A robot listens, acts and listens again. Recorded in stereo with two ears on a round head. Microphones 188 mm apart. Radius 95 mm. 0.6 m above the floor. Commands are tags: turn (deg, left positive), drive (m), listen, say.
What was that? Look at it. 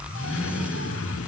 <turn deg="65"/>
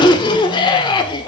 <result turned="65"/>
<turn deg="25"/>
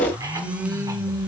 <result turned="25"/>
<turn deg="-15"/>
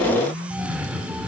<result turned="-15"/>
<say>Found it: a cough, straight ahead, 1 to 2 m away.</say>